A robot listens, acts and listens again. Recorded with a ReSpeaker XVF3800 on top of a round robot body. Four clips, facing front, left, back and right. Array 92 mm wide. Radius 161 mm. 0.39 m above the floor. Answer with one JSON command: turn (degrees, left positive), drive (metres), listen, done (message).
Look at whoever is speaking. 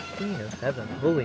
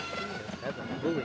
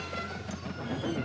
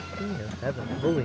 {"turn": -20}
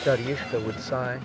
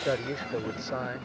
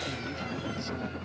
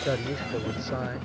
{"done": "Found it: a man speaking, straight ahead."}